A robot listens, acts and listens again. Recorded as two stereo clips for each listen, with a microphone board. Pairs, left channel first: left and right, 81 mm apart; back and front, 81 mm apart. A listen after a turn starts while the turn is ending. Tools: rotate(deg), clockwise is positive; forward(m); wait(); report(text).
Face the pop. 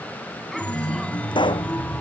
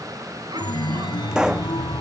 rotate(-80)
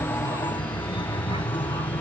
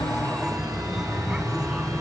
report("I heard a pop from this way, but can't make it out now.")